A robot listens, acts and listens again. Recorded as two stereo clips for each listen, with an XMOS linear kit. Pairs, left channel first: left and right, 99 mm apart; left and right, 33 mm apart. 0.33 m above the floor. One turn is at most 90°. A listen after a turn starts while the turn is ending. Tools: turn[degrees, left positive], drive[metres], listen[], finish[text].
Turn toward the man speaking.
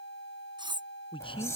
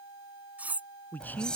Thought: The man speaking: about 60° left or 120° left.
Action: turn[60]
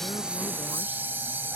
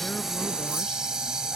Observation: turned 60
Action: listen[]
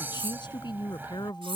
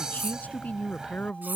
Thought: So it is at 55° left.
Action: turn[55]
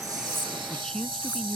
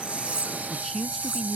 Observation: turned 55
Action: finish[Found it: a man speaking, straight ahead.]